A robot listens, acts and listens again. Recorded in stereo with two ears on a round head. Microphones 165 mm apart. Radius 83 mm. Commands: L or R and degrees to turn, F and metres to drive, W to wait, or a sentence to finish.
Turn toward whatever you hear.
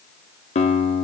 L35
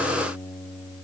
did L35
Facing the guitar.